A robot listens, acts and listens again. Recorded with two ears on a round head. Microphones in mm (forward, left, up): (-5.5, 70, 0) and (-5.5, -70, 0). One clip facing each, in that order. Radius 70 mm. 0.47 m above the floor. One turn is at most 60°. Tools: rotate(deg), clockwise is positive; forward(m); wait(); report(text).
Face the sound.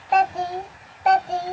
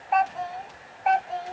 rotate(-50)
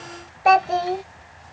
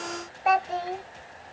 rotate(-55)
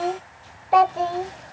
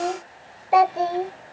rotate(20)
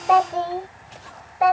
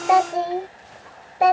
rotate(35)
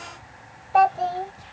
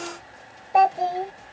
rotate(20)
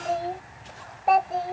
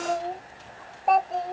report("Found it: a child speaking, straight ahead.")